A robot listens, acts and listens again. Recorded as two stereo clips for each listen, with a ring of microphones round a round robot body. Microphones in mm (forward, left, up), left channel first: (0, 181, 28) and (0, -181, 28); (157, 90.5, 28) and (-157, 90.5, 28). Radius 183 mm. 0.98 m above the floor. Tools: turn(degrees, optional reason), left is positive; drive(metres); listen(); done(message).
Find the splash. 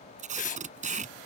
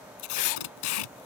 listen()
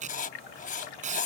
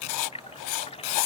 turn(degrees=70, reason="The splash: 70° left.")
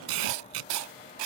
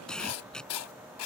done("I heard a splash from this way, but can't make it out now.")